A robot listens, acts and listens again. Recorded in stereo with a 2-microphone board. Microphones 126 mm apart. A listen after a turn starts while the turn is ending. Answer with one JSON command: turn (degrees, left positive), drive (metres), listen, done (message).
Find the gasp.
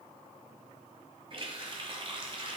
{"listen": true}
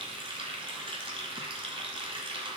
{"listen": true}
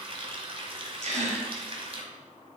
{"turn": -60}
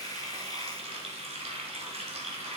{"listen": true}
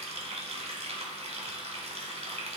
{"done": "I heard a gasp, but can't make it out now. It was about straight ahead or 60° right."}